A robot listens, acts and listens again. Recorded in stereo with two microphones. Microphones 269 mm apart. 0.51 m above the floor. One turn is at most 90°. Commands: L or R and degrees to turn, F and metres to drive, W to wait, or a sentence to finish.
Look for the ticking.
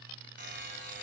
W
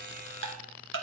R50
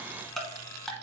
Found it: ticking, straight ahead.